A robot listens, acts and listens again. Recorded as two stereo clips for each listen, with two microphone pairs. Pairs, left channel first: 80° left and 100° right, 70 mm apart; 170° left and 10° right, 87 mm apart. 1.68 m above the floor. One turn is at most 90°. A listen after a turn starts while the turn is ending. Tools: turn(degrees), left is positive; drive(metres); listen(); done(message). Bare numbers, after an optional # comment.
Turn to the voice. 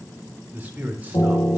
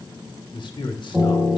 # The man speaking: 165° right.
turn(-90)
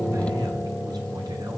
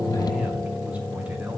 # Nothing new. It was at 75° right.
turn(-75)
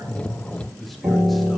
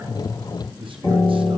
# The man speaking is now 10° right.
turn(-10)
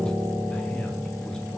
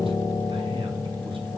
listen()
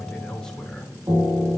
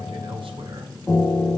listen()
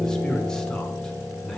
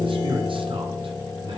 done("Facing the man speaking, 1 to 2 m away.")